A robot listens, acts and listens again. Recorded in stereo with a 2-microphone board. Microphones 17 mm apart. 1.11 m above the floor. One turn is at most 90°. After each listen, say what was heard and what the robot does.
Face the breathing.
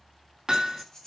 The breathing: about 25° left or 155° left. Turn 25° left.
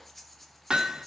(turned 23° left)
Facing the breathing.